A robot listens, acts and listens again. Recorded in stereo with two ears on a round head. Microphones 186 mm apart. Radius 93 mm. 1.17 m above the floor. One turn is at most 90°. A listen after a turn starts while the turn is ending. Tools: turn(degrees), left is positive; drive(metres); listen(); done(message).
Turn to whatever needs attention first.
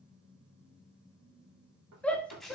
turn(degrees=30)
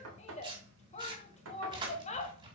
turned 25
turn(degrees=90)
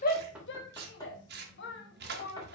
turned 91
turn(degrees=55)
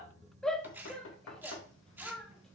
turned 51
done("Facing the shout, 1 to 2 m away.")